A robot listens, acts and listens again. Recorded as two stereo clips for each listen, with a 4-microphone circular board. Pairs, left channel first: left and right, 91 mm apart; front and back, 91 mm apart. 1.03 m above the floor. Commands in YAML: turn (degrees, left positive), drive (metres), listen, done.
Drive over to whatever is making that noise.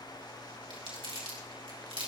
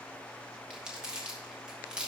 turn: -100
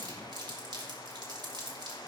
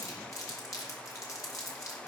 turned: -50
turn: -50
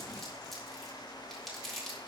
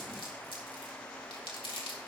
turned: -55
drive: 1.0
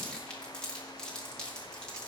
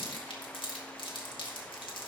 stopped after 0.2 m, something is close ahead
turn: 10
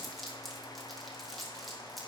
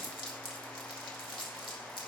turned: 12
done: "Blocked. The crumpling is further on, straight ahead."